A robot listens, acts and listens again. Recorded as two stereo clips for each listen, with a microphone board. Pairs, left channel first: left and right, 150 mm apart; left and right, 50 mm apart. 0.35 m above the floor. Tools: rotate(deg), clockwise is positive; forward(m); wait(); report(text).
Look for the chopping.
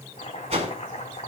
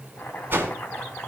rotate(-50)
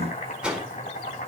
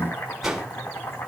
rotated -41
rotate(-85)
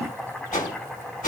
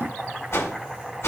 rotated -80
report("Facing the chopping, 2 to 4 m away.")